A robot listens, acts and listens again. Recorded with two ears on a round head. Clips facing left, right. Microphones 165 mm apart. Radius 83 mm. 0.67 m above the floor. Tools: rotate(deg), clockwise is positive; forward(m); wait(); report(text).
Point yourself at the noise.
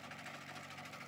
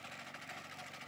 wait()
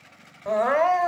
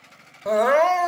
rotate(55)
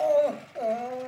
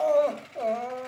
report("Facing the crying, 1 to 2 m away.")